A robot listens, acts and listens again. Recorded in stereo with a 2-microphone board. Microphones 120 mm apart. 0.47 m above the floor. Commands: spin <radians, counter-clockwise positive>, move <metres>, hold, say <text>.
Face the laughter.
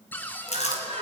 spin -0.96
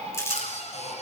spin -1.05
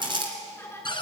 spin 0.35
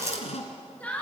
spin 0.17
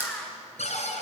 say Facing the laughter, over 4 m away.